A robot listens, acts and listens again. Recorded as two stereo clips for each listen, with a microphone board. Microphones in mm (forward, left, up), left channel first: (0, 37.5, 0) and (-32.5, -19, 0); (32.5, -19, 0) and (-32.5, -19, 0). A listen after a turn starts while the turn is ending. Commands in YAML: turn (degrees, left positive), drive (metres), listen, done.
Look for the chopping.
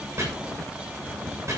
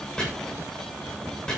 turn: -75
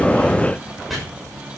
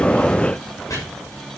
turn: -30
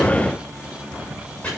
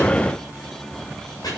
turn: -10
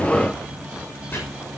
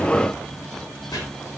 done: "Found it: chopping, straight ahead."